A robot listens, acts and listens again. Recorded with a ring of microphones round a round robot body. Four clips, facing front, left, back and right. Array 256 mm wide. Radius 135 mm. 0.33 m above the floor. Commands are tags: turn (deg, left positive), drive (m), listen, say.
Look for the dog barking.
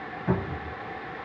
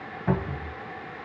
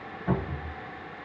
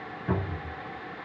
<listen/>
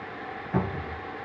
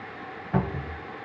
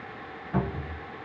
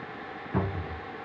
<listen/>
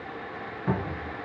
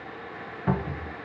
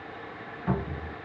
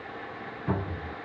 <say>I can't make out a dog barking to turn to.</say>